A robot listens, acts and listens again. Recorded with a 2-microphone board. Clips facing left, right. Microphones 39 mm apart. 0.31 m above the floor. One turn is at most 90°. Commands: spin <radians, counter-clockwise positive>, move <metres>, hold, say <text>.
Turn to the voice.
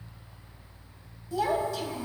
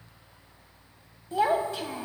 spin -0.70
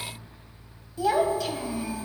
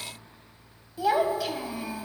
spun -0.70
spin -0.17
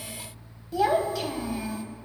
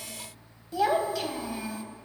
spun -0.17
say Found it: a child speaking, straight ahead.